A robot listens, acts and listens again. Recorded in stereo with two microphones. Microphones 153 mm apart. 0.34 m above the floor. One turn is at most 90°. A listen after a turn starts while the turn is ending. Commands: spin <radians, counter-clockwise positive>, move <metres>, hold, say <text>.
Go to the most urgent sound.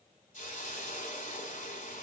hold
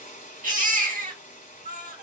spin -1.13
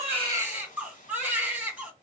spin -0.17
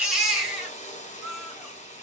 move 1.0
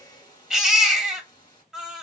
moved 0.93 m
move 1.0
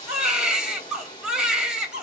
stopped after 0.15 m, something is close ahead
say Arrived at the baby crying, straight ahead.